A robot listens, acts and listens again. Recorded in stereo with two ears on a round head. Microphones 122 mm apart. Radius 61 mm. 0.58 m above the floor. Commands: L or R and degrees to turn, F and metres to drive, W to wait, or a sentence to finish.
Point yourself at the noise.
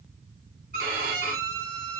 R75
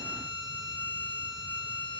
R30
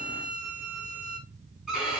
Found it: a violin, straight ahead.